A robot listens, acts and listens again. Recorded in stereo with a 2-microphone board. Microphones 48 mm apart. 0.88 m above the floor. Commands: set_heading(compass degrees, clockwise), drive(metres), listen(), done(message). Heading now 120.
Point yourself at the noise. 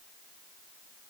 listen()
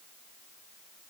listen()
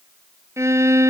set_heading(210)
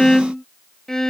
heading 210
set_heading(200)
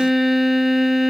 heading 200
done("Facing the violin.")